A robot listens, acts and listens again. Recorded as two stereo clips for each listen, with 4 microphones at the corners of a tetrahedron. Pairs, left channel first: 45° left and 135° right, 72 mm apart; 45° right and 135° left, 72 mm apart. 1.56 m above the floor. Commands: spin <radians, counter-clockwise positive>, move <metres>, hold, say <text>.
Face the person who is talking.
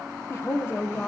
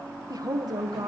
spin 1.75
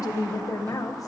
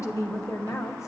say Facing the woman speaking, 1 to 2 m away.